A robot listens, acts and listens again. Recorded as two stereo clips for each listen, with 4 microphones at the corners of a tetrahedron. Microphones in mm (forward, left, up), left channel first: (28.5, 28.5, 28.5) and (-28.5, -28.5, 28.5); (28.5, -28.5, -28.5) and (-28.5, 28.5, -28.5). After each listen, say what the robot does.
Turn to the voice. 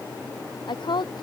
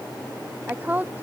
Turn 65° left.
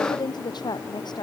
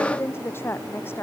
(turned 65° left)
Turn 15° left.
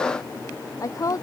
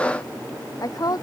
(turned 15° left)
Facing the woman speaking.